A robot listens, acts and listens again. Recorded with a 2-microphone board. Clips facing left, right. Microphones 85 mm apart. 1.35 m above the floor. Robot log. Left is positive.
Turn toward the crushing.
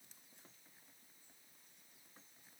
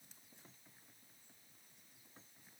cmd idle
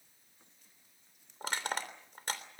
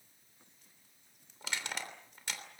note: The crushing: about 40° left or 140° left.
cmd yaw +40
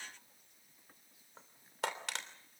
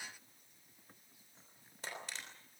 note: So it is at 100° left.
cmd yaw +100
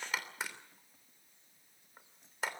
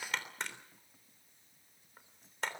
end: Found it: crushing, straight ahead.